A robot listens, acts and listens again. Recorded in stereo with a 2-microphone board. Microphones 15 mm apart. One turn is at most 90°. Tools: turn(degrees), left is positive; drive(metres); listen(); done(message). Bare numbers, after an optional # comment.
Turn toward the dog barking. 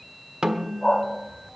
# The dog barking: about 50° left or 130° left.
turn(50)
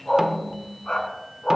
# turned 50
# So it is at 85° left.
turn(85)
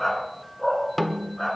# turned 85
# The dog barking is now 25° left.
turn(25)
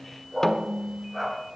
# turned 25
done("Facing the dog barking.")